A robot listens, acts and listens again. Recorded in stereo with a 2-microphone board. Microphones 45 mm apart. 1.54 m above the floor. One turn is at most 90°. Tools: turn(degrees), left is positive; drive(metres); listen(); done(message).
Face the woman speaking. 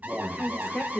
turn(degrees=30)
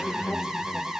listen()
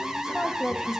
turn(degrees=90)
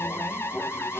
turn(degrees=60)
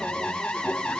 listen()
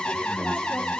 done("I heard a woman speaking from this way, but can't make it out now.")